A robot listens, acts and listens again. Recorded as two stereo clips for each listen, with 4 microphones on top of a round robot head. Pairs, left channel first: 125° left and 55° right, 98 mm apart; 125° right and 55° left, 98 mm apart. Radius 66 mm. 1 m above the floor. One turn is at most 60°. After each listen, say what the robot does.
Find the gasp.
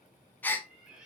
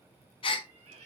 Turn 60° right.
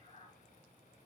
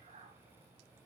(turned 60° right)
Turn 60° right.
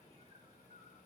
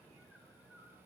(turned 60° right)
Turn 40° right.
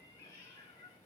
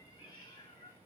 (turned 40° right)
I heard a gasp from this way, but can't make it out now.